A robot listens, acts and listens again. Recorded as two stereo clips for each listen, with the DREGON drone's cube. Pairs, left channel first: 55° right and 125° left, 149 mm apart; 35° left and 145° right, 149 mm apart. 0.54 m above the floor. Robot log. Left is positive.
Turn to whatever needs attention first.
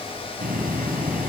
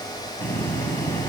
cmd idle
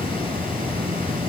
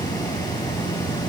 cmd idle
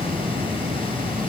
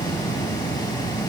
end: I can't make out anything urgent to turn to.